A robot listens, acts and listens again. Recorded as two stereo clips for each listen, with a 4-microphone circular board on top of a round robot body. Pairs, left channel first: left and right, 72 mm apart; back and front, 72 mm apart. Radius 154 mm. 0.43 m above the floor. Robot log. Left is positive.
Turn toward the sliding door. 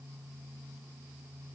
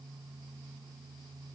cmd idle
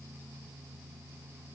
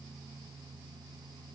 cmd idle
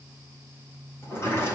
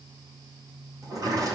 note: The sliding door: 35° left.
cmd yaw +35
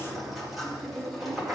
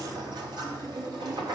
end: Found it: a sliding door, straight ahead, 2 to 4 m away.